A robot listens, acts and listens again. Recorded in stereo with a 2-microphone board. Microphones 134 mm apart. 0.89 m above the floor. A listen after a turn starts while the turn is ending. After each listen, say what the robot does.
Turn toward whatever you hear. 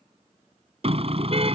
Turn 50° right.
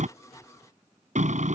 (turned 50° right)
Turn 75° right.
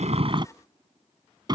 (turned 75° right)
Turn 35° right.
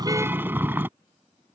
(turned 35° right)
Turn 15° right.
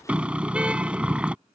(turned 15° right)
Turn 10° right.
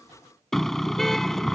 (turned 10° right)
Found it: a car horn, straight ahead.